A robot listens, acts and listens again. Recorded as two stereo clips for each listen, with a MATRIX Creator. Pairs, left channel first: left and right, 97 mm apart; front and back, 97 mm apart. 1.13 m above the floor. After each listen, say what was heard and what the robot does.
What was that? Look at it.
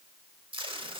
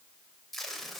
The tape being pulled: 85° right. Turn 85° right.
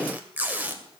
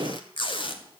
The tape being pulled is now 20° right. Turn 20° right.
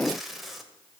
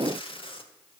Facing the tape being pulled, 1 to 2 m away.